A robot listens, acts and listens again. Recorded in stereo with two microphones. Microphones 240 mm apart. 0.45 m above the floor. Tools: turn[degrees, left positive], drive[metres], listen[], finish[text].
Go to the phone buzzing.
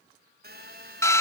Thought: The phone buzzing: about 40° right or 140° right.
Action: turn[-40]
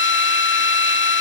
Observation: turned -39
Action: listen[]
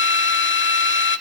Action: listen[]
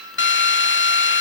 Action: finish[I heard a phone buzzing, but can't make it out now. It was about straight ahead or 100° right. I did not reach it.]